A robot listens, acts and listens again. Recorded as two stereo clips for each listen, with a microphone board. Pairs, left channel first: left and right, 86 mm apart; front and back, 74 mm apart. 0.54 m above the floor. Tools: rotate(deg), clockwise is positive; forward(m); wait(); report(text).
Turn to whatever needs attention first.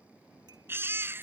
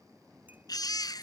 rotate(25)
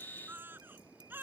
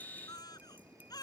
rotate(25)
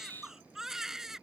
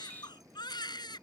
report("Found it: a baby crying, straight ahead.")